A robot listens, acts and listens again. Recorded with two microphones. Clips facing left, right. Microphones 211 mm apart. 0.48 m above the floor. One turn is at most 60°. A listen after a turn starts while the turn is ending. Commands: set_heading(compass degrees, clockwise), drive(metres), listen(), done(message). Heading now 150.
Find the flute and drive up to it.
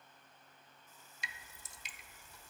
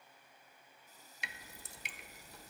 listen()
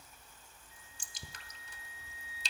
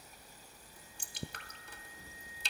set_heading(90)
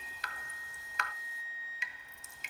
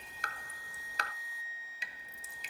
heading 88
set_heading(58)
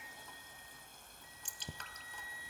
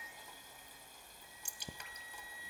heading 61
drive(1.0)
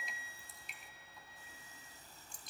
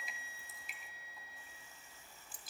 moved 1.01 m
drive(1.0)
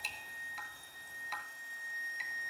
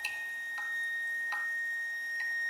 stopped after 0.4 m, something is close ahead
done("Arrived at the flute, straight ahead.")